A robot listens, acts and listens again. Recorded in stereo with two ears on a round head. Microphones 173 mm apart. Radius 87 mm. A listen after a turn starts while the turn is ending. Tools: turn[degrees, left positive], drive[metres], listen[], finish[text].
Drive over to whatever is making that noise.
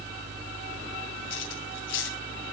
Thought: The cutlery clinking: about 75° left or 105° left.
Action: turn[75]
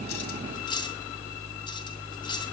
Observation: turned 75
Thought: So it is at 25° left.
Action: turn[25]
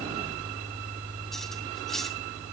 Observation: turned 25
Action: listen[]
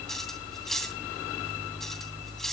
Action: drive[1.0]
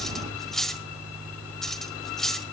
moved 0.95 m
Action: drive[1.0]
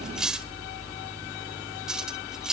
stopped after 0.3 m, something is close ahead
Action: finish[I am next to the cutlery clinking.]